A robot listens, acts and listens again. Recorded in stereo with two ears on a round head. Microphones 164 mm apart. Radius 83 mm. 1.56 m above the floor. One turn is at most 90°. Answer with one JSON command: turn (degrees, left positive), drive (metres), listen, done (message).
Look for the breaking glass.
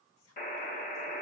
{"listen": true}
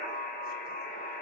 {"listen": true}
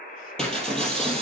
{"turn": 30}
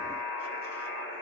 {"listen": true}
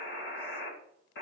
{"done": "I heard breaking glass, but can't make it out now. It was about 25° right or 145° left."}